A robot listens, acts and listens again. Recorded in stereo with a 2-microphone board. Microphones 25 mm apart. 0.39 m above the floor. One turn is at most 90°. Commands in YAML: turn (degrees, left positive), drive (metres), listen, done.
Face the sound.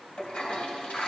turn: 60
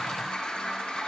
turn: 50
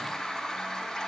turn: 20
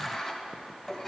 done: "Found it: a toilet flushing, straight ahead, 2 to 4 m away."